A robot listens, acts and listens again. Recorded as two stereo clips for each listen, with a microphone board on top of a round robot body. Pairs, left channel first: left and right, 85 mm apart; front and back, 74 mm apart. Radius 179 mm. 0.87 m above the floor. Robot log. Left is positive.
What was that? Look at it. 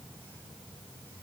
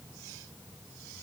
cmd idle
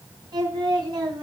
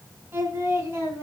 note: The singing: 125° right.
cmd yaw -125
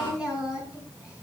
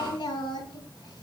note: The singing is now 10° right.
cmd yaw -10
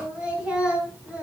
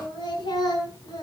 note: The singing is now 15° right.
cmd yaw -15
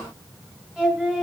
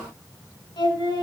end: Found it: singing, straight ahead.